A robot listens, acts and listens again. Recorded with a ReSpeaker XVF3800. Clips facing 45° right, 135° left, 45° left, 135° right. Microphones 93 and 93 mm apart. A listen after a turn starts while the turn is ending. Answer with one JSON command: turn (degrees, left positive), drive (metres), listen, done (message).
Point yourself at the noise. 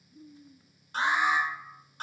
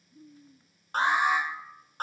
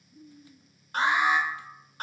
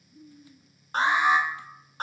{"turn": 170}
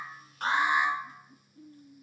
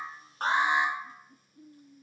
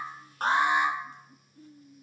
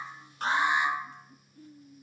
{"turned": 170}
{"turn": 75}
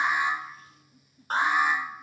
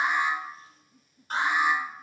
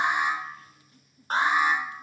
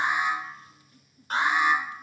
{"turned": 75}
{"done": "Facing the alarm."}